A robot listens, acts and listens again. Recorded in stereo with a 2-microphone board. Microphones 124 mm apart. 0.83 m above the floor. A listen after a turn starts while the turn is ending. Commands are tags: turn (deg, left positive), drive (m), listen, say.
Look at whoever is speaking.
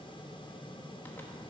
<listen/>
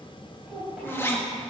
<turn deg="-30"/>
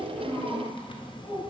<turn deg="35"/>
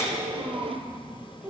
<say>Facing the child speaking.</say>